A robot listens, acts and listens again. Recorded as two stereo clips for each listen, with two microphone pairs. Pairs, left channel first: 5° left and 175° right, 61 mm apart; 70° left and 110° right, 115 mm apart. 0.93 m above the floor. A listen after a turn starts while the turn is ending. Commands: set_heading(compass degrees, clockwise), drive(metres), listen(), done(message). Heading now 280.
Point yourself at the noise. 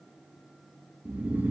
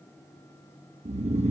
set_heading(35)
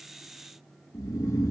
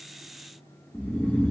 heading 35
set_heading(45)
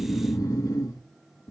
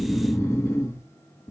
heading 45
done("Found it: snoring, straight ahead.")